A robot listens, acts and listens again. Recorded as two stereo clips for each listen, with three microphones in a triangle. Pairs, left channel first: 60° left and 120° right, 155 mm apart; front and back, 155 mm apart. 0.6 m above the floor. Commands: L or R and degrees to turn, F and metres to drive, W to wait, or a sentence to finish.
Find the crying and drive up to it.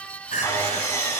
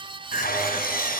L25
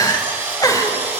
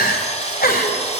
R10
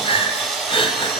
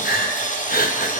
F1.0
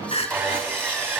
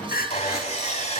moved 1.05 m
L10
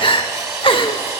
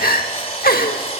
F1.0
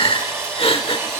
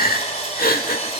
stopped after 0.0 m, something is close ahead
I am next to the crying.